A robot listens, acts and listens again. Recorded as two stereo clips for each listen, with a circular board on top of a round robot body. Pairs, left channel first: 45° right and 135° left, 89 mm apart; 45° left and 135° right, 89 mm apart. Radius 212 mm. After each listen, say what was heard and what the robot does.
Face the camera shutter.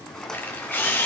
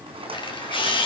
The camera shutter: 20° left. Turn 20° left.
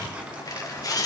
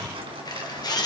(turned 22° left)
Facing the camera shutter.